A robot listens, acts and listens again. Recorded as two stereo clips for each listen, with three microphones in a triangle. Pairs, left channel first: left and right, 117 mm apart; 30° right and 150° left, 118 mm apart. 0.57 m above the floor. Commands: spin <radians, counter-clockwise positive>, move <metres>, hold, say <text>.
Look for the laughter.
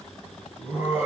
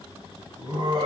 spin -2.88
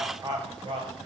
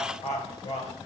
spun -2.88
spin -0.79
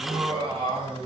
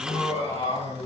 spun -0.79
spin -0.87
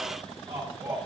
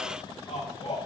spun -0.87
spin -0.44
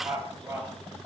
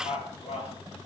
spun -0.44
spin -0.26
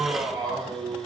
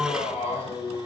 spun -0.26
say Found it: laughter, straight ahead, 2 to 4 m away.